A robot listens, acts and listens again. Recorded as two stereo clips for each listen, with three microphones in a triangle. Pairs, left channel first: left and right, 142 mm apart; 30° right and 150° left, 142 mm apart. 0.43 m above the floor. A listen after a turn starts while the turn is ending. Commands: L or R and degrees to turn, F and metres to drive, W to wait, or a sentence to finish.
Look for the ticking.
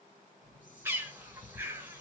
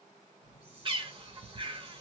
L150
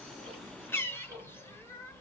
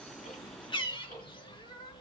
R30
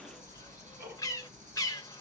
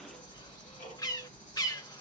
R25
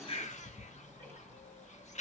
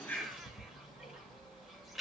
L10
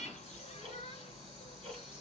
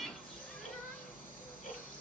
Facing the ticking, 2 to 4 m away.